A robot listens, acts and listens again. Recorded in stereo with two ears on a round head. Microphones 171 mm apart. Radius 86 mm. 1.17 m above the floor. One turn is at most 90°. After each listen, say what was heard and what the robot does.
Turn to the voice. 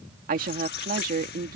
The woman speaking: about 45° right or 135° right. Turn 45° right.
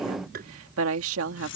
So it is at 90° right. Turn 90° right.
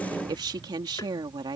The woman speaking is now 20° right. Turn 20° right.
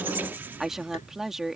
Found it: a woman speaking, straight ahead.